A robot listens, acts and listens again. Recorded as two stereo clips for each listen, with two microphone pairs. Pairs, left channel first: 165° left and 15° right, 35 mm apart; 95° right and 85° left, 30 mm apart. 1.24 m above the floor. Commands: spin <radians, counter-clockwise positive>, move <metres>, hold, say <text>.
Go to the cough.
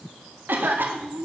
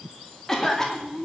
spin -0.35
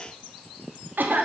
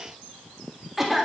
move 1.0
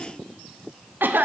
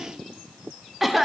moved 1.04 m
move 1.0
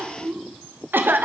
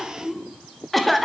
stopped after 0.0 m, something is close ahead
say Arrived at the cough, straight ahead.